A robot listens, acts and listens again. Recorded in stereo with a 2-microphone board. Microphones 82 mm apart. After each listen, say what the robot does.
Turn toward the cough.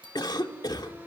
Turn 65° left.
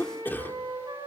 Turn 30° left.
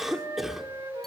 Found it: a cough, straight ahead, 2 to 4 m away.